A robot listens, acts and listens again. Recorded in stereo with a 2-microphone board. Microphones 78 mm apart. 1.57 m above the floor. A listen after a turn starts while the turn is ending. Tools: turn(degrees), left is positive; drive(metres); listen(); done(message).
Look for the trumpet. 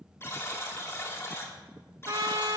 turn(degrees=-50)
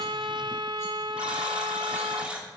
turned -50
turn(degrees=-75)
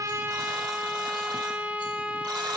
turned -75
turn(degrees=-15)
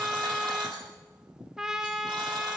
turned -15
done("Facing the trumpet, 1 to 2 m away.")